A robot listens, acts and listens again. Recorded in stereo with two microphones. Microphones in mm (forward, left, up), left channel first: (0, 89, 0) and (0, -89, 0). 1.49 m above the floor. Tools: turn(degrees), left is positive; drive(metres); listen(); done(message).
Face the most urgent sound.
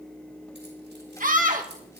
turn(degrees=-50)
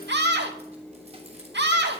turn(degrees=-80)
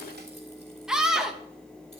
done("Found it: a scream, straight ahead.")